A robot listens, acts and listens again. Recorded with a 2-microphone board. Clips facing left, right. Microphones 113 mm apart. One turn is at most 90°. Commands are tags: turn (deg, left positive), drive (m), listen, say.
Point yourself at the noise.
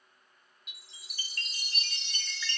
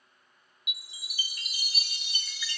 <turn deg="-30"/>
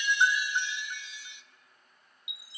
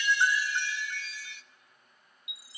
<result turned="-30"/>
<turn deg="20"/>
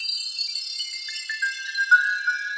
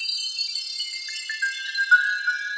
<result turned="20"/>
<say>Found it: a chime, straight ahead, under 1 m away.</say>